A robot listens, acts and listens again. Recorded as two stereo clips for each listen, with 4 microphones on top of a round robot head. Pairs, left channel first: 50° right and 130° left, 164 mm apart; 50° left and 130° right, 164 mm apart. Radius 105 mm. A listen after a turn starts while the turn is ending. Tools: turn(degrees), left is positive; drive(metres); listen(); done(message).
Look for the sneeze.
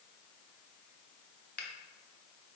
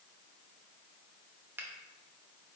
listen()
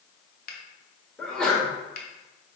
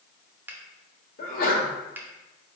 turn(degrees=35)
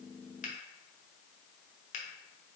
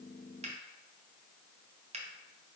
done("I heard a sneeze from this way, but can't make it out now.")